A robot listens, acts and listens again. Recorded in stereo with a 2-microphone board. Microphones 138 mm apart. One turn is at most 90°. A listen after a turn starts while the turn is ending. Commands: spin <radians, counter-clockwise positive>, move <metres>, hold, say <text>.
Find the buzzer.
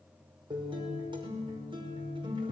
hold
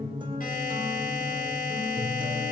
spin 1.57
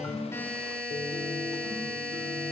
spin 0.17
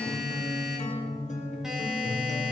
hold
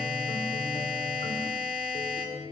say Found it: a buzzer, straight ahead, over 4 m away.